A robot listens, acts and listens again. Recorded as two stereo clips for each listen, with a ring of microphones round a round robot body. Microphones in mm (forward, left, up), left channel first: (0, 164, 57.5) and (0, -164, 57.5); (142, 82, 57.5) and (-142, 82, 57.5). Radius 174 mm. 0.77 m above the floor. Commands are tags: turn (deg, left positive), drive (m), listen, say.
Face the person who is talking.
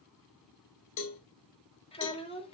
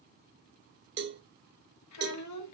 <turn deg="15"/>
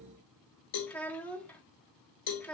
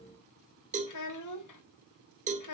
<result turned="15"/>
<say>Found it: a child speaking, straight ahead.</say>